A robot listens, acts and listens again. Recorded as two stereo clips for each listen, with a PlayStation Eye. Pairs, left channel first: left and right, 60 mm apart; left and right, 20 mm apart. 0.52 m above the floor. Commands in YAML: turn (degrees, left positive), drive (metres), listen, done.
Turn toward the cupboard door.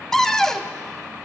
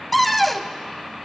turn: 30
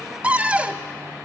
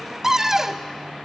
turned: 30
turn: -20
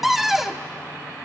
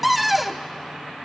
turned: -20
done: "Found it: a cupboard door, straight ahead."